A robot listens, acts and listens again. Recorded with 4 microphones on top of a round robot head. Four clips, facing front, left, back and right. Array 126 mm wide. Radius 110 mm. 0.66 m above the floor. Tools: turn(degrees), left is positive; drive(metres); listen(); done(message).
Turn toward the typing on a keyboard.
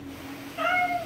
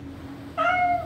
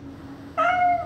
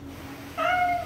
listen()
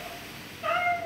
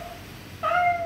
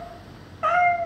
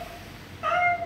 listen()
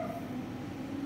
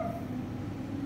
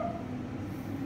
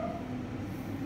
done("I can't make out typing on a keyboard, only a cat meowing.")